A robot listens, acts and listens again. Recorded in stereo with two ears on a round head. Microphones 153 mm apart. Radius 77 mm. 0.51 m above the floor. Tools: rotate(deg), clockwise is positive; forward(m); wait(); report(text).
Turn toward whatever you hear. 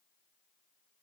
wait()
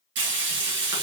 rotate(90)
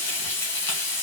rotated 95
rotate(-15)
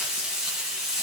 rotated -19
report("Facing the frying, 2 to 4 m away.")